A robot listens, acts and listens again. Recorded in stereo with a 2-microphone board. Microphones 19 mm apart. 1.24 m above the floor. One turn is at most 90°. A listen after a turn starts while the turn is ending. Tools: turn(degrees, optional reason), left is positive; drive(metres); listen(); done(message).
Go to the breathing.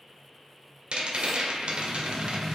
turn(degrees=-30)
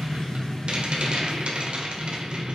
turn(degrees=15, reason="So it is at 15° left.")
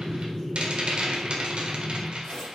drive(metres=1.0)
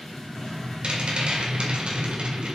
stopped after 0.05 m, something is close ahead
done("Blocked. The breathing is further on, straight ahead.")